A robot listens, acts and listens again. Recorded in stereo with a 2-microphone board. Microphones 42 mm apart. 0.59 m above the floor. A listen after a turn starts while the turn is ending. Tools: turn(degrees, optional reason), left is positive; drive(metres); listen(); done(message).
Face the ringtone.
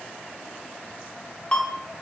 turn(degrees=25, reason="The ringtone: about 25° left or 155° left.")
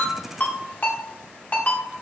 turn(degrees=125, reason="So it is at 125° left.")
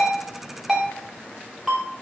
turn(degrees=-10, reason="The ringtone is now 10° right.")
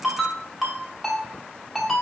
done("Found it: a ringtone, straight ahead, 1 to 2 m away.")